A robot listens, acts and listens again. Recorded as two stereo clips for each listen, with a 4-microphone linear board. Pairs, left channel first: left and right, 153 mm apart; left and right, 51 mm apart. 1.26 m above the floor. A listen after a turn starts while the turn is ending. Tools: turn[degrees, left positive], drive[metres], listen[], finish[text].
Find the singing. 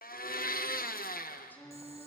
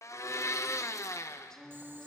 Action: turn[30]
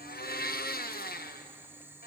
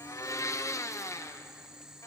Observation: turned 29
Action: listen[]
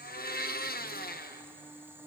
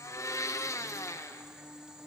Thought: So it is at 145° left.
Action: turn[145]
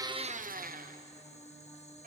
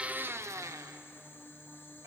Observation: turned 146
Action: finish[Found it: singing, straight ahead.]